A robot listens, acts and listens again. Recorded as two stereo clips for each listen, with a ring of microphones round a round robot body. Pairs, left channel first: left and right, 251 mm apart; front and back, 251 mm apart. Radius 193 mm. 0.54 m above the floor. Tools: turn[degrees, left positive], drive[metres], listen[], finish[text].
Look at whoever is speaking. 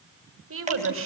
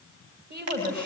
Thought: The woman speaking: 120° right.
Action: turn[-120]
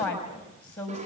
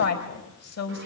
Action: finish[Facing the woman speaking.]